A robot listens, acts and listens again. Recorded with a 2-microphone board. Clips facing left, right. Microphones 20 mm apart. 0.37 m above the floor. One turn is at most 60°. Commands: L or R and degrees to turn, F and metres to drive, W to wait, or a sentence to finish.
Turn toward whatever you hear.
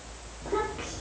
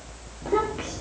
R30
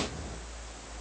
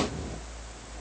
R60
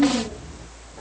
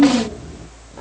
R60
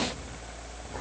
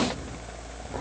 R25
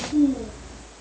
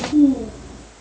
Found it: a child speaking, straight ahead.